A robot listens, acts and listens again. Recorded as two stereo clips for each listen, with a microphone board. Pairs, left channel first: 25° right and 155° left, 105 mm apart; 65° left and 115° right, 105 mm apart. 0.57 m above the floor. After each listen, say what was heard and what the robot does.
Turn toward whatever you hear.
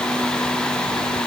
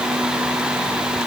Keep listening.
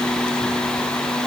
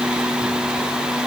Keep listening.
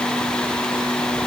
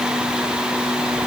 I can't make out anything to turn to.